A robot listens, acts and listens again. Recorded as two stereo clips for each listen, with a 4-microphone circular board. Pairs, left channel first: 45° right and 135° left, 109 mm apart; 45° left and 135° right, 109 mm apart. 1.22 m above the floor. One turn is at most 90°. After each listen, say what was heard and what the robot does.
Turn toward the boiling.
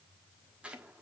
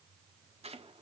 Keep listening.
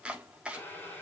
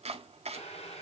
The boiling: 30° left. Turn 30° left.
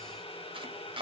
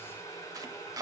The boiling is now 15° right. Turn 15° right.
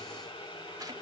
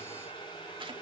Facing the boiling, over 4 m away.